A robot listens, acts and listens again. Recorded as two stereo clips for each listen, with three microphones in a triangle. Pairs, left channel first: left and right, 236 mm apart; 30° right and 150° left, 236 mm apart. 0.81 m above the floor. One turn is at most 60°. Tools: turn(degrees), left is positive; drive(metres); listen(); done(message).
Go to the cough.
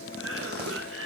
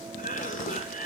turn(degrees=-60)
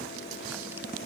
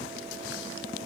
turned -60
turn(degrees=-25)
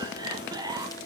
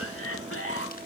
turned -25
turn(degrees=-15)
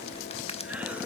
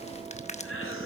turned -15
listen()
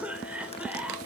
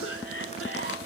drive(metres=1.0)
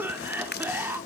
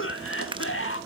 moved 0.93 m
turn(degrees=-10)
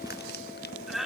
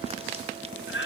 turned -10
drive(metres=1.0)
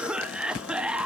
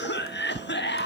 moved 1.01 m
drive(metres=1.0)
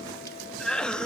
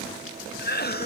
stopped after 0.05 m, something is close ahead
done("I am next to the cough.")